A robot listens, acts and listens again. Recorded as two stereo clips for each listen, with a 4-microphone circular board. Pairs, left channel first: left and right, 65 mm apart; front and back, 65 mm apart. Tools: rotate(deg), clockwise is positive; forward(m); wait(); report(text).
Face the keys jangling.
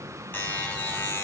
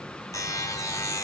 wait()
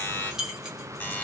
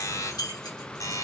rotate(10)
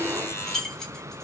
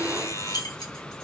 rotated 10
rotate(-10)
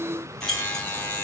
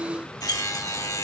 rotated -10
rotate(-10)
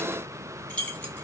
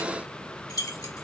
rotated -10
rotate(-20)
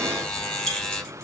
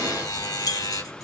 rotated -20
rotate(-10)
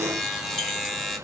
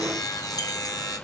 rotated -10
wait()
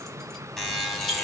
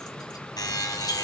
wait()
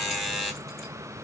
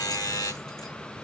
report("Facing where the keys jangling came from. I can't hear it now.")